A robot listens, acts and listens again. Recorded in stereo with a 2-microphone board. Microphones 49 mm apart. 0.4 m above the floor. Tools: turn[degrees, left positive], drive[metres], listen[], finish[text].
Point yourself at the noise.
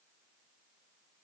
Action: listen[]
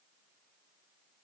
Action: listen[]
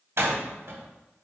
Thought: The door slam: about 65° right or 115° right.
Action: turn[-65]
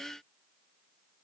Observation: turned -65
Action: listen[]
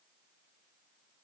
Action: finish[I heard a door slam, but can't make it out now. It was about straight ahead or 50° right.]